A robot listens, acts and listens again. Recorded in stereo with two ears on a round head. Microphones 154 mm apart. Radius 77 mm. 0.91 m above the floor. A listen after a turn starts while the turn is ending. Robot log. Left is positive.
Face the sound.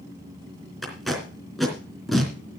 cmd yaw +30
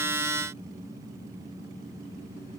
cmd idle
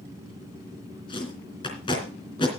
note: So it is at 150° left.
cmd yaw +150
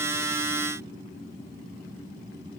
cmd idle
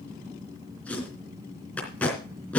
note: The tape being pulled is now 10° left.
cmd yaw +10
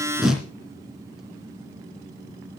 end: Found it: tape being pulled, straight ahead, 2 to 4 m away.